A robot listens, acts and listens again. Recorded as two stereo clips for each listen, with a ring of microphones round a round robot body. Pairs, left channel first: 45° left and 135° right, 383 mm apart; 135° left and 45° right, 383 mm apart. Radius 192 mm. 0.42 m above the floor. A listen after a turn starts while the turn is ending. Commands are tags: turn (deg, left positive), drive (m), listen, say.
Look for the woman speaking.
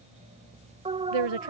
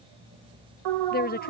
<turn deg="-160"/>
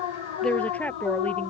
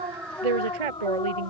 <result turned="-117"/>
<turn deg="-40"/>
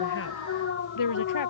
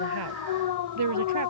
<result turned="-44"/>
<say>Found it: a woman speaking, straight ahead.</say>